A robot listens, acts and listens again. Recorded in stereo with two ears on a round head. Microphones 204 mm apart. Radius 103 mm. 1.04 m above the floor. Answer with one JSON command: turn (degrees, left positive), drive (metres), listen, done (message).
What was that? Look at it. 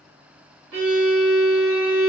{"turn": -60}
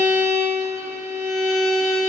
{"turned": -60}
{"turn": -40}
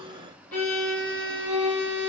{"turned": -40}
{"done": "Found it: a violin, straight ahead."}